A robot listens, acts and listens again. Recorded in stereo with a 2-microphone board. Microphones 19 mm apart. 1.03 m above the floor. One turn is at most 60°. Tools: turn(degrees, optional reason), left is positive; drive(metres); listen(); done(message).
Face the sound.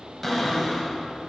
turn(degrees=30)
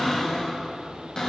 turn(degrees=60, reason="So it is at 140° left.")
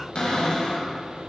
turn(degrees=60, reason="The cupboard door is now 70° left.")
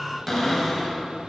turn(degrees=15, reason="The cupboard door is now 15° left.")
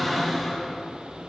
done("Found it: a cupboard door, straight ahead.")